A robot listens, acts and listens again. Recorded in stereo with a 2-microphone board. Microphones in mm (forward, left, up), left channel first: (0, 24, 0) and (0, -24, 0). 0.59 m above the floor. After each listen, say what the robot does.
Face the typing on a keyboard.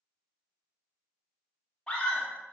Keep listening.
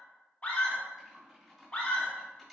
Turn 30° right.
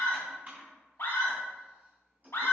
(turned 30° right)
Turn 140° right.
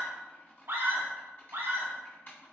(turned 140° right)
Turn 50° left.
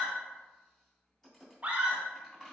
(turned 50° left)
Turn 15° left.
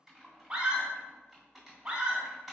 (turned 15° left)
Found it: typing on a keyboard, straight ahead.